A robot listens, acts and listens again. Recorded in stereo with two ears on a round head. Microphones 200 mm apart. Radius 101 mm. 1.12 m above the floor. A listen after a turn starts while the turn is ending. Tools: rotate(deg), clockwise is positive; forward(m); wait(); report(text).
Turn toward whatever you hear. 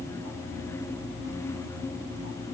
wait()
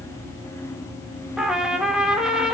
rotate(30)
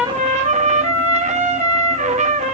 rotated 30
rotate(150)
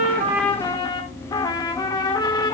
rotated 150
rotate(-15)
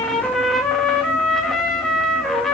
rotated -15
report("Found it: a trumpet, straight ahead.")